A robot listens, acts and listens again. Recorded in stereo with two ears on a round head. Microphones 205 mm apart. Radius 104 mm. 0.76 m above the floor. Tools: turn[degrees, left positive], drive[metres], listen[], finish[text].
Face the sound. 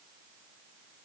Action: listen[]
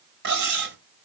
Thought: The cutlery clinking: about 45° right or 135° right.
Action: turn[-45]
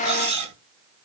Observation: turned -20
Thought: So it is at 25° right.
Action: turn[-25]
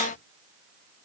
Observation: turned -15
Thought: Nothing new. It was at 10° right.
Action: turn[-10]
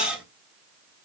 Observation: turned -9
Action: finish[Found it: cutlery clinking, straight ahead, 2 to 4 m away.]